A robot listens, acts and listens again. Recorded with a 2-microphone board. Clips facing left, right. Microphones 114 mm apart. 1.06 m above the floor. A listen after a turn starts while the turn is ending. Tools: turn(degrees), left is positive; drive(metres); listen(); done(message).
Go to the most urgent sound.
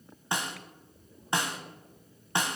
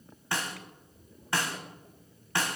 listen()
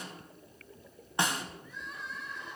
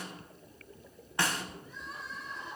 turn(degrees=-40)
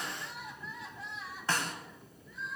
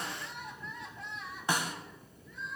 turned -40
drive(metres=1.0)
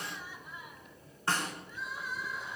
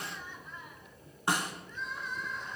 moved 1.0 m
turn(degrees=10)
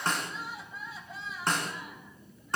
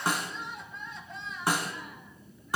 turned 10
drive(metres=1.0)
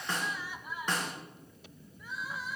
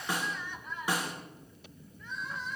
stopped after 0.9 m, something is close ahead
turn(degrees=10)
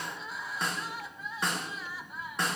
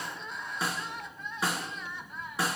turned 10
done("I am next to the crying.")